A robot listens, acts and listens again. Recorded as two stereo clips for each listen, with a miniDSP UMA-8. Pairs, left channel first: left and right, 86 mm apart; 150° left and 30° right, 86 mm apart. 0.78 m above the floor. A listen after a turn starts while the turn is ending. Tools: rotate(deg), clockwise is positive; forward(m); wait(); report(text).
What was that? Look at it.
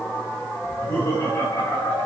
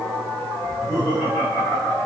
rotate(-90)
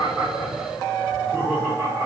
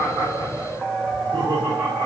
rotate(-10)
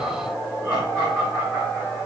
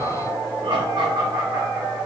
report("Found it: laughter, straight ahead, 2 to 4 m away.")